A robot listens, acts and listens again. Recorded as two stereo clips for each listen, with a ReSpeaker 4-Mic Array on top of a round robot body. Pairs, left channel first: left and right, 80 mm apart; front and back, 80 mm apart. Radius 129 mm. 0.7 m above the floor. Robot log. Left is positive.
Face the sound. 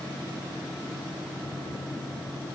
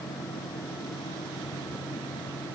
cmd idle
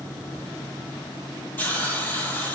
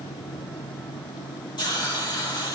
note: The hiss: 25° left.
cmd yaw +25
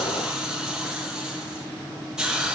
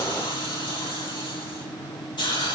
note: The hiss is now 10° right.
cmd yaw -10
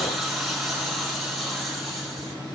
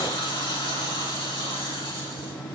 end: Facing the hiss, 2 to 4 m away.